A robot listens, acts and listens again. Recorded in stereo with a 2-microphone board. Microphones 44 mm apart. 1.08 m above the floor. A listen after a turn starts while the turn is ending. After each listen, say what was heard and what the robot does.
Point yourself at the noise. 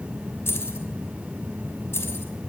Turn 90° left.
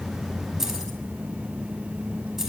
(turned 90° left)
So it is at 10° right. Turn 10° right.
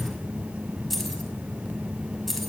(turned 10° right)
Found it: keys jangling, straight ahead, over 4 m away.